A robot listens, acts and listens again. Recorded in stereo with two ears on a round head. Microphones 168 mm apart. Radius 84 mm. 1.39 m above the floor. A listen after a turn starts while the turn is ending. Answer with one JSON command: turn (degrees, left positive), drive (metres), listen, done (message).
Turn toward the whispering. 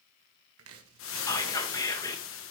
{"turn": 20}
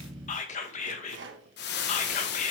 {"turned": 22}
{"turn": 140}
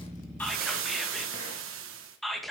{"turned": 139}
{"done": "Found it: whispering, straight ahead, 1 to 2 m away."}